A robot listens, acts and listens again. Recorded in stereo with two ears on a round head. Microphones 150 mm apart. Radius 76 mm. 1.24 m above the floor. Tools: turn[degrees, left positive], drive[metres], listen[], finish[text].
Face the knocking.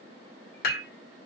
Action: listen[]
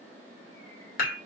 Action: listen[]
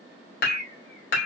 Action: finish[I can't make out knocking, only dishes clattering and a bird.]